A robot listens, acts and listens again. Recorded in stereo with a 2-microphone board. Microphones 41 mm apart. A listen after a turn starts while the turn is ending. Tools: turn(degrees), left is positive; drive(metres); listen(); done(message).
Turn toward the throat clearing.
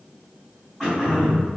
turn(degrees=-30)
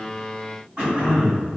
turn(degrees=-140)
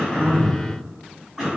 turn(degrees=-10)
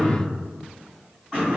done("Found it: throat clearing, straight ahead.")